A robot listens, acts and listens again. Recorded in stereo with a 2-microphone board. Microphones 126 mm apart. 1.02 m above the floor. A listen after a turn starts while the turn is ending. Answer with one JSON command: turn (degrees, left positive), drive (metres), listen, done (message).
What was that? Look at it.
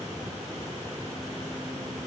{"listen": true}
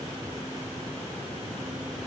{"listen": true}
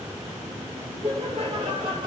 {"turn": -45}
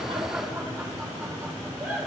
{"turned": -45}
{"done": "Found it: laughter, straight ahead."}